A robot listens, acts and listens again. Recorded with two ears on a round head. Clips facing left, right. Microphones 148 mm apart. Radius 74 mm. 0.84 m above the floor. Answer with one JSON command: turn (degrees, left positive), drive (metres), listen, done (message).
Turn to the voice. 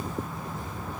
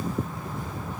{"listen": true}
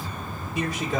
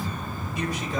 {"turn": 60}
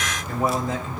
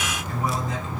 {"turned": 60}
{"turn": 50}
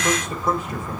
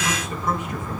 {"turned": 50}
{"turn": 35}
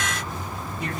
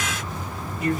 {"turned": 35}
{"done": "Facing the man speaking."}